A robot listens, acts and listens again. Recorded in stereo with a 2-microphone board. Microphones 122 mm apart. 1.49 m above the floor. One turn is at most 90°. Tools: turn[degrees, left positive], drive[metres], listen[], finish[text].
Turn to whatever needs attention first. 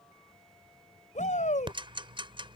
Action: turn[90]
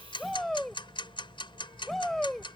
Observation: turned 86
Action: finish[Found it: a shout, straight ahead.]